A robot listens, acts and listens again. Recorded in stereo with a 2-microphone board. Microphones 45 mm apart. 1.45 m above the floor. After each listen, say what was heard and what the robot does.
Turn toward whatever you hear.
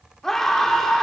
Turn 30° left.
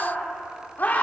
So it is at 140° left. Turn 140° left.
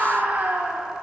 The scream is now 45° right. Turn 45° right.
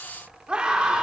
The scream is now 20° right. Turn 20° right.
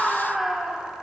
Facing the scream, over 4 m away.